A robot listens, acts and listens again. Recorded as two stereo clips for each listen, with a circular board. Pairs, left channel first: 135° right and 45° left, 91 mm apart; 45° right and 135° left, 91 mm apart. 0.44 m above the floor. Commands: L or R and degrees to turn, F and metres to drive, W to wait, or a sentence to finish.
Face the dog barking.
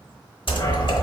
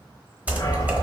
R95
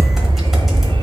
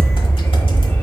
L15
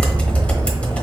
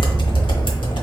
Found it: a dog barking, straight ahead.